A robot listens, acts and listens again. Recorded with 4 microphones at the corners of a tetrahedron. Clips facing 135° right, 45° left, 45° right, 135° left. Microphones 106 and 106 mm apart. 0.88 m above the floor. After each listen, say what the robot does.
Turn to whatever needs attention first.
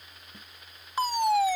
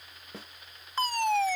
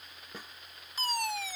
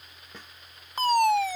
Turn 150° left.
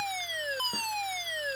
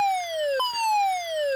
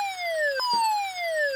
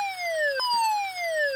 Turn 40° left.
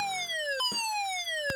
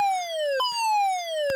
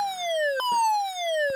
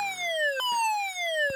Turn 20° left.
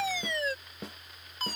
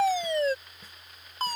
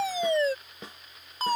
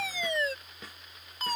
Found it: a fire alarm, straight ahead.